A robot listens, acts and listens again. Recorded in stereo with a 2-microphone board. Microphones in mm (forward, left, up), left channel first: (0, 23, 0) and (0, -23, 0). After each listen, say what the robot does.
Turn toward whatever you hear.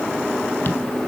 Keep listening.
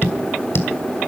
Turn 50° left.
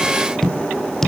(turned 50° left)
Turn 10° left.
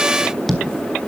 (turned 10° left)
Facing the tapping, 1 to 2 m away.